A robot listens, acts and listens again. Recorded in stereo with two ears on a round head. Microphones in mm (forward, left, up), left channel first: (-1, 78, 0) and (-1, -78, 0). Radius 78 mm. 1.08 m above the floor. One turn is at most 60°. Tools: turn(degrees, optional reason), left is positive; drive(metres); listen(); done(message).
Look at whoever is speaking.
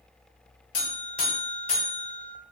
listen()
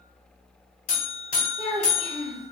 turn(degrees=30)
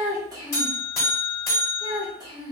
turn(degrees=-25, reason="So it is at 25° right.")
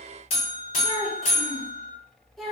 done("Found it: a child speaking, straight ahead, 1 to 2 m away.")